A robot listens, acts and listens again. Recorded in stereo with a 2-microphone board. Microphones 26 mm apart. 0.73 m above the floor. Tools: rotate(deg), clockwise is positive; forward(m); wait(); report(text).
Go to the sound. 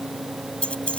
rotate(-50)
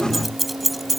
forward(1.0)
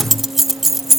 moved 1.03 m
rotate(10)
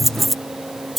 forward(1.0)
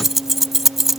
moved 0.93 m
rotate(10)
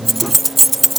forward(1.0)
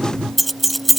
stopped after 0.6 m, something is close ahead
report("I am next to the keys jangling.")